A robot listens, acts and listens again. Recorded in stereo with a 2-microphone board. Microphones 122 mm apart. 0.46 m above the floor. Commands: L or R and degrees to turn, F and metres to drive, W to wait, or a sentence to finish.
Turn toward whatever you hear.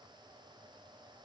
W
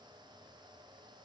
W
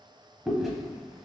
L30
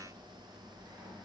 W
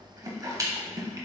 R30
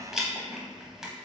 Facing the chewing.